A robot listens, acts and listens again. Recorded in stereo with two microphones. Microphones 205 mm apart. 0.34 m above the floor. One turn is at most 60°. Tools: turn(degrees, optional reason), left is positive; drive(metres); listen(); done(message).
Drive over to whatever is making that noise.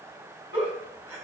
turn(degrees=-30)
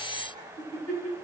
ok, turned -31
turn(degrees=-60, reason="So it is at 135° right.")
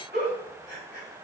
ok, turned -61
turn(degrees=-60, reason="The giggle is now 75° right.")
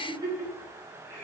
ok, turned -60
turn(degrees=-15, reason="The giggle is now 15° right.")
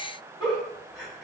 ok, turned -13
drive(metres=1.0)
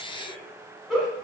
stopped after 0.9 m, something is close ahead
done("I am next to the giggle.")